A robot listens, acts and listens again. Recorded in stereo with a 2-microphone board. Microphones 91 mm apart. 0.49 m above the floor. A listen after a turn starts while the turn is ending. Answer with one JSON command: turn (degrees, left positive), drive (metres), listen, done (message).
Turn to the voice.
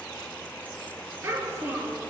{"turn": -30}
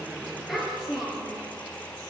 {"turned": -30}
{"done": "Found it: a child speaking, straight ahead, over 4 m away."}